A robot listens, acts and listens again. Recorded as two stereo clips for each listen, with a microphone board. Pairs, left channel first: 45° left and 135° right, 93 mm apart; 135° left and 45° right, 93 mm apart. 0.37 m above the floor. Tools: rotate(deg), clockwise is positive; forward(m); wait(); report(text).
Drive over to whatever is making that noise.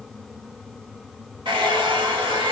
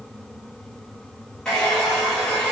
rotate(140)
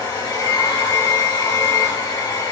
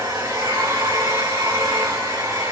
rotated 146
forward(1.0)
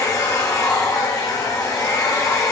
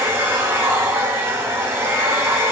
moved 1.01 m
forward(1.0)
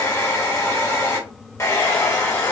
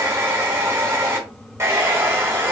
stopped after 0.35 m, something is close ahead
report("Arrived at the hair dryer, straight ahead.")